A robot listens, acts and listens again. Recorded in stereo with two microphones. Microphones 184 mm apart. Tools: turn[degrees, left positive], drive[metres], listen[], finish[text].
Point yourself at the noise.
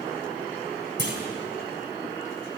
Thought: The clunk: about 75° right or 105° right.
Action: turn[-75]
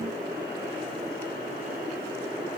Action: listen[]
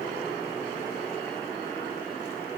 Action: finish[I heard a clunk, but can't make it out now. It was about straight ahead or 30° right.]